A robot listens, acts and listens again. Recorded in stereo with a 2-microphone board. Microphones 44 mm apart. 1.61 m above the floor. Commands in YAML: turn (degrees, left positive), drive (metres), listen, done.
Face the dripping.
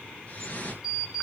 turn: 30
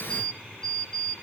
listen: true
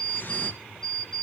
listen: true
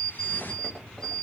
done: "I heard dripping, but can't make it out now. It was about straight ahead or 120° left."